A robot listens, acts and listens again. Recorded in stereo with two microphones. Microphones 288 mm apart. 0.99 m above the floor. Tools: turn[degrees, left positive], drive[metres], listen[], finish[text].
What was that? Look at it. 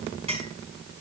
Thought: The clink: about 20° right or 160° right.
Action: turn[-20]
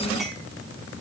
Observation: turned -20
Action: listen[]
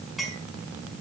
Action: finish[Found it: a clink, straight ahead.]